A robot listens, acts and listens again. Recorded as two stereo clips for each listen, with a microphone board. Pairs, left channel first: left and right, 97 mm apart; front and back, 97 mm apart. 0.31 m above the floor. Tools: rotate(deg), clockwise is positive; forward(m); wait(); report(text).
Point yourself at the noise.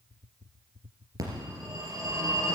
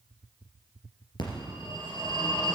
rotate(40)
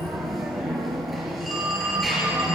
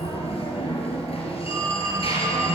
report("Found it: a phone ringing, straight ahead.")